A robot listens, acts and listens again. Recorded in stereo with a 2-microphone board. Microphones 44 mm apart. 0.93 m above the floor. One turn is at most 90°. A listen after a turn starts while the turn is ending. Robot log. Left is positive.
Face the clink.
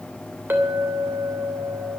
note: The clink: about 50° right or 130° right.
cmd yaw -50
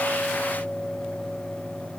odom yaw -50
end: Found it: a clink, straight ahead, 2 to 4 m away.